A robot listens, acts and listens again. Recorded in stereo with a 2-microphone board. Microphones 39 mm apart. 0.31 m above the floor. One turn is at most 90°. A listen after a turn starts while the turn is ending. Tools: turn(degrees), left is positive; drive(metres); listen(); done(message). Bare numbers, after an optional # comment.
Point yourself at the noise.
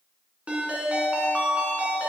# The ringtone: about 30° right or 150° right.
turn(-30)
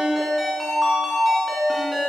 done("Found it: a ringtone, straight ahead.")